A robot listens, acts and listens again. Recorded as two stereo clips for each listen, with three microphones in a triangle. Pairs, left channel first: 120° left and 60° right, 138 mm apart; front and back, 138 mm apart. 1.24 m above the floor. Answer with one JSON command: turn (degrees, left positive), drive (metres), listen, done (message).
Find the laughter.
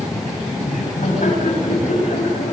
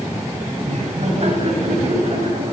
{"turn": 140}
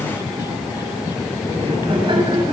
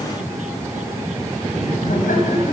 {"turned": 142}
{"turn": -10}
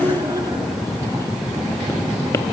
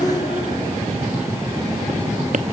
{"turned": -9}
{"done": "Found it: laughter, straight ahead."}